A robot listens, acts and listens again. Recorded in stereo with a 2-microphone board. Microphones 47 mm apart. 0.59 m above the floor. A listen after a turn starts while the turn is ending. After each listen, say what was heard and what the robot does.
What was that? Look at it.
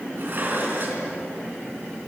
The dishes clattering: about 50° right or 130° right. Turn 50° right.
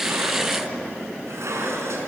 So it is at 80° right. Turn 80° right.
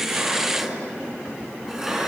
Facing the dishes clattering.